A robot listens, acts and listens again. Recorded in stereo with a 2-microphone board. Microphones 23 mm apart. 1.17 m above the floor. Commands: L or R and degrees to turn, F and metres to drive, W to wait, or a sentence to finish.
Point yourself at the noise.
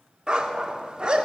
R35
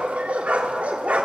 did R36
R100
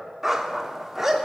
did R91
R10
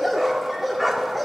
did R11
Facing the dog barking.